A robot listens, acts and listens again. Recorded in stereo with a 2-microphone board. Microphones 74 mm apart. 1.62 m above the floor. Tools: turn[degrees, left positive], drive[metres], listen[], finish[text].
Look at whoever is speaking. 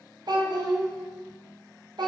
Thought: The child speaking: about 60° right or 120° right.
Action: turn[-60]
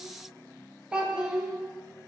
Thought: So it is at 15° right.
Action: turn[-15]
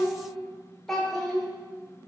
Action: finish[Found it: a child speaking, straight ahead.]